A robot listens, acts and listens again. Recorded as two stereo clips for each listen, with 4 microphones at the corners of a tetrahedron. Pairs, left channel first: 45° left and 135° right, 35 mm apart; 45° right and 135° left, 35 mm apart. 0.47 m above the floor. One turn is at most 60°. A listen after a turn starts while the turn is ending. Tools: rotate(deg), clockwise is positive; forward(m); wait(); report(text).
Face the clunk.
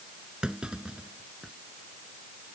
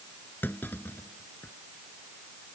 rotate(60)
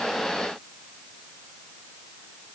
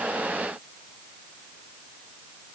rotate(10)
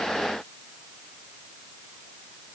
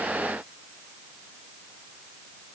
report("I heard a clunk from this way, but can't make it out now.")